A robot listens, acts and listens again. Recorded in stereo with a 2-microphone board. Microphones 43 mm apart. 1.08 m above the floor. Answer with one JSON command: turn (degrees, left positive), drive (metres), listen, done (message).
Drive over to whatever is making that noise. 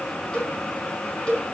{"turn": 20}
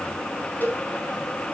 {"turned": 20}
{"turn": 135}
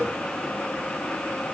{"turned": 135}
{"listen": true}
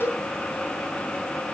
{"turn": 60}
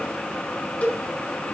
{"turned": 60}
{"turn": 35}
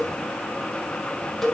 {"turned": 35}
{"drive": 1.0}
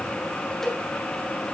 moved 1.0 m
{"turn": 10}
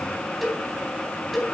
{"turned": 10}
{"drive": 1.0}
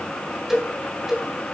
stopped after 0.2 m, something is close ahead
{"turn": -10}
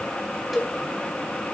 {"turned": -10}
{"done": "Something is in my way. I am facing the cowbell but have not reached it."}